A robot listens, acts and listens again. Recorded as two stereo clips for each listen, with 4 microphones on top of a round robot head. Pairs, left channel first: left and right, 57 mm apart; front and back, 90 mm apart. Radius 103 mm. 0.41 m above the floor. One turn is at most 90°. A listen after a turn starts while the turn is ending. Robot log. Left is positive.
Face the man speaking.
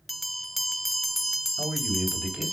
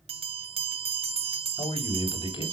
note: The man speaking: 25° right.
cmd yaw -25
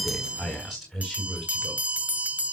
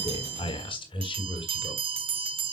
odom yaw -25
end: Found it: a man speaking, straight ahead.